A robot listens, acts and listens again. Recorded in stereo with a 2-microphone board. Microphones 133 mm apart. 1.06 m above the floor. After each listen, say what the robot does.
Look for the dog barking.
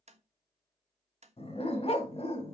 Turn 50° left.
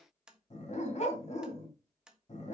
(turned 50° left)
Turn 70° left.
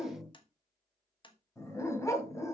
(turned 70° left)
Turn 25° left.
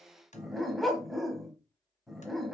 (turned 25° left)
Facing the dog barking.